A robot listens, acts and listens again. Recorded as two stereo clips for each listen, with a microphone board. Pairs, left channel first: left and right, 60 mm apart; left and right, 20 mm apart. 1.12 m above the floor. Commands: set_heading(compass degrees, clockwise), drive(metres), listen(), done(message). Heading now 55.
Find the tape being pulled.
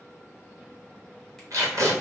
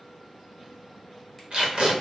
set_heading(115)
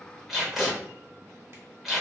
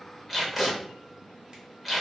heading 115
done("Found it: tape being pulled, straight ahead, under 1 m away.")